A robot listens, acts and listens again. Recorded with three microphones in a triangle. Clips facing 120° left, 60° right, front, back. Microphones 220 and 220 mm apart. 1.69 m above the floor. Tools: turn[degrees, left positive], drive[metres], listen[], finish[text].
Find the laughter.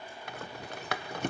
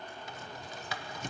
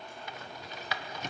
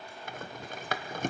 Action: listen[]
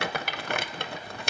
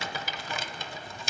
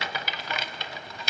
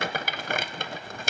Action: listen[]
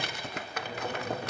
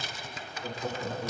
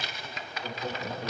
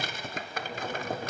Thought: The laughter: 55° right.
Action: turn[-55]
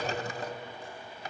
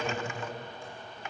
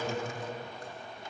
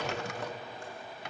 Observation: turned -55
Thought: The laughter is now 25° right.
Action: turn[-25]
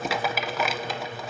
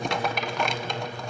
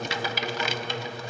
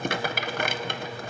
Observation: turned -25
Action: finish[Found it: laughter, straight ahead, over 4 m away.]